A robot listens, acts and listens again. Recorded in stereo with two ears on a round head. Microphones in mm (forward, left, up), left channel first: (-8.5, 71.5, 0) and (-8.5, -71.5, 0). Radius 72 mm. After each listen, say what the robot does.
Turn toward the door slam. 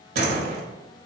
Turn 65° right.
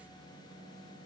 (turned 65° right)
Keep listening.
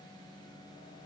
I heard a door slam, but can't make it out now. It was about straight ahead or 50° right.